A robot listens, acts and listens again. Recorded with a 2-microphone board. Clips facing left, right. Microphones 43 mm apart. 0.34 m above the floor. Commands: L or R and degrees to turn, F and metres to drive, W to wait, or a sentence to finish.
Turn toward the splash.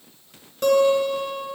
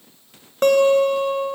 W
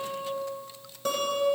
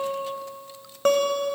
W
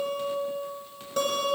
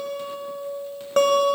I can't make out a splash, only a guitar.